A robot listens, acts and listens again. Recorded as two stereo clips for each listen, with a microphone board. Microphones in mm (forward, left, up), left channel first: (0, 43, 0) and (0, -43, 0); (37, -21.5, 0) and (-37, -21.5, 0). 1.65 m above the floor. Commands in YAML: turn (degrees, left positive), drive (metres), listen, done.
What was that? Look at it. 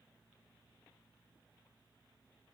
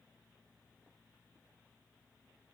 listen: true
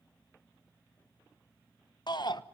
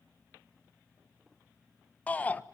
turn: 65
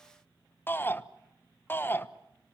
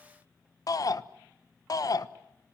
turn: 25
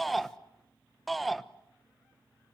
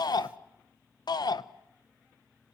done: "Facing the shout, 1 to 2 m away."